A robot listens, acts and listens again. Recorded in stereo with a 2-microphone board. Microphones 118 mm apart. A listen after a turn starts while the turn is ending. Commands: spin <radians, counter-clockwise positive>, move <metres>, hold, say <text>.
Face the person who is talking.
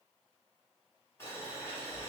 hold
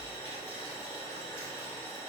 hold
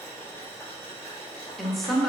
spin 0.52
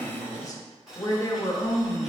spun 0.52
spin 2.62
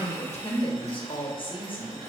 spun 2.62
spin 0.87
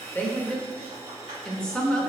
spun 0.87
say Facing the woman speaking, under 1 m away.